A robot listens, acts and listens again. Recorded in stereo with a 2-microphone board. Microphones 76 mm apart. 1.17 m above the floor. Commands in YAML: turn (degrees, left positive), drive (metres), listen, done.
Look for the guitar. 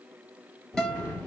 turn: 30
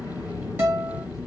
turn: -30
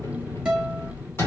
listen: true
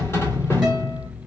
listen: true
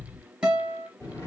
turn: -15
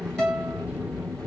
done: "Facing the guitar, 2 to 4 m away."